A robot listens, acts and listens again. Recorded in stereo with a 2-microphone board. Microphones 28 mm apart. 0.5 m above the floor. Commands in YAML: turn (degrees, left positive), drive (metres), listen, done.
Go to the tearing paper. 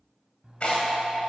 turn: 40
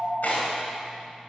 turn: 95
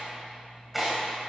drive: 1.0
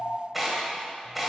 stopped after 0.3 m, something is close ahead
done: "Something is in my way. I am facing the tearing paper but have not reached it."